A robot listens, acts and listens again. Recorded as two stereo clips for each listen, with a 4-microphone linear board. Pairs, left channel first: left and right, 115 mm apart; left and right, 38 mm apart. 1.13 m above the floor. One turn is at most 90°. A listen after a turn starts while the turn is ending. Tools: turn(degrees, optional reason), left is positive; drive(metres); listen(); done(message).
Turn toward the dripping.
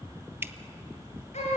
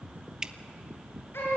turn(degrees=-20, reason="The dripping: about 20° right or 160° right.")
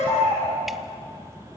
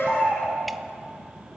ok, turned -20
listen()
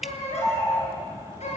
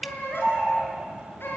done("Found it: dripping, straight ahead.")